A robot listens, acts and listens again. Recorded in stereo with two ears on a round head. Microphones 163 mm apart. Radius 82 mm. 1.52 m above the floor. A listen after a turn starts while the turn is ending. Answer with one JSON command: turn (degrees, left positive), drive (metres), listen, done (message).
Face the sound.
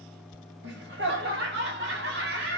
{"turn": -65}
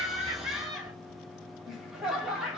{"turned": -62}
{"done": "Facing the laughter."}